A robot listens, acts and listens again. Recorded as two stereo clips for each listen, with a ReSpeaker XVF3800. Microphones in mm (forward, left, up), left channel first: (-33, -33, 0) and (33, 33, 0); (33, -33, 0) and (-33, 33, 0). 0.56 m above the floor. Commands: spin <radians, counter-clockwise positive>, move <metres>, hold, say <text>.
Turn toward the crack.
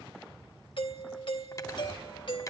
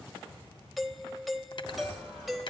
hold
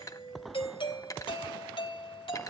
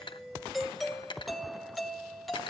hold
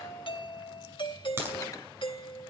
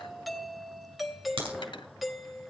spin 1.92
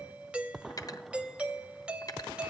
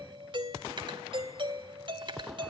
say I heard a crack from this way, but can't make it out now.